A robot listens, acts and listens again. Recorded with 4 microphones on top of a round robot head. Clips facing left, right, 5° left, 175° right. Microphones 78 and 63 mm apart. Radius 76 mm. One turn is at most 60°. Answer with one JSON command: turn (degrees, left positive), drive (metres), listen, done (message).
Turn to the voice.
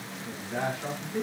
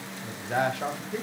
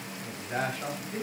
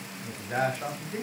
{"turn": -60}
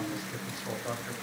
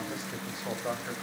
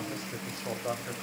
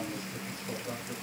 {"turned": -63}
{"turn": -25}
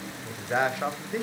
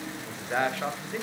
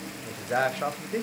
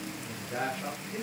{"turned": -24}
{"turn": 20}
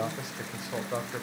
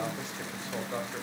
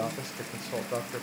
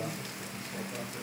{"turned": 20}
{"turn": 20}
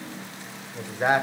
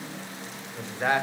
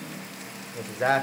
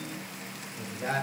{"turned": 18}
{"turn": 20}
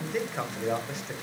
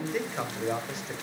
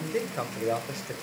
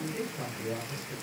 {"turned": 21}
{"done": "Facing the man speaking, 1 to 2 m away."}